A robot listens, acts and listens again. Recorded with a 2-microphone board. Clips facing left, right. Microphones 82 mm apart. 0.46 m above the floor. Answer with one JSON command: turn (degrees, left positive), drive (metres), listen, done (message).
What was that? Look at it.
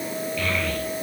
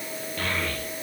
{"turn": -45}
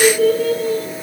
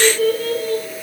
{"done": "Found it: a child speaking, straight ahead, over 4 m away."}